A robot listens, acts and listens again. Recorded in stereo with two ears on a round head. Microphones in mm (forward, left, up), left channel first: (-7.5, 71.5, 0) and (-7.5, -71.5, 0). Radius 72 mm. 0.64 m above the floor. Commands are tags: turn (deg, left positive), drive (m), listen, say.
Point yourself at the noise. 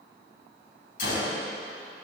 <turn deg="60"/>
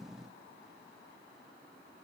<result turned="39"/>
<listen/>
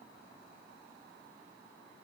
<say>I heard a gunshot, but can't make it out now. It was about 20° left or 80° left.</say>